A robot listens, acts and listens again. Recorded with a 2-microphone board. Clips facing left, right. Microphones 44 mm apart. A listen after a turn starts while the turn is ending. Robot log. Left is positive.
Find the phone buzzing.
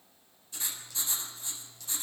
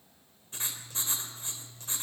cmd idle
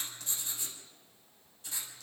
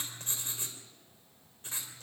cmd idle
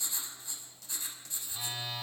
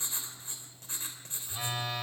note: The phone buzzing: about 45° right or 135° right.
cmd yaw -45
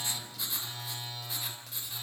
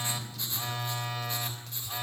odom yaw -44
note: So it is at 90° right.
cmd yaw -90
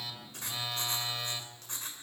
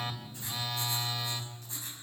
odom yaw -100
note: The phone buzzing is now 10° left.
cmd yaw +10
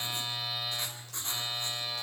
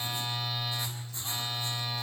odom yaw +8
end: Found it: a phone buzzing, straight ahead.